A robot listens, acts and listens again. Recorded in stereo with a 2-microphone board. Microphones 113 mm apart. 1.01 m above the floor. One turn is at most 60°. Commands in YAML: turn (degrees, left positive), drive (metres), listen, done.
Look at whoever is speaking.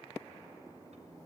listen: true
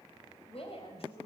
turn: 55
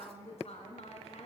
turn: 60
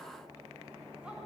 listen: true
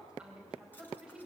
turn: -10
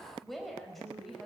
done: "Found it: a woman speaking, straight ahead."